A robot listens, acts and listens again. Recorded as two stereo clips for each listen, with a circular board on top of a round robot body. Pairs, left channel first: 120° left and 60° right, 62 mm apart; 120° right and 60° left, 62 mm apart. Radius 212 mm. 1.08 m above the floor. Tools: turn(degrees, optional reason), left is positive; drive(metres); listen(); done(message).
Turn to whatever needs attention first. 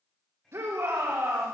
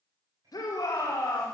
turn(degrees=-105, reason="The shout: 105° right.")
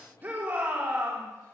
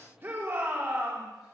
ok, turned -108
done("Found it: a shout, straight ahead, over 4 m away.")